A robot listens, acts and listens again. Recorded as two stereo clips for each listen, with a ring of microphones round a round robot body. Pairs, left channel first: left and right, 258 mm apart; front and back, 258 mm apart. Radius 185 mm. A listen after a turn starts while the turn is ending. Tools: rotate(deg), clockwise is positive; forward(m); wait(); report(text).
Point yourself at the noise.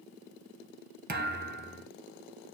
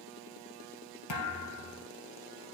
rotate(35)
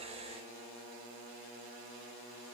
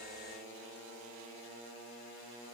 report("Facing where the thud came from. I can't hear it now.")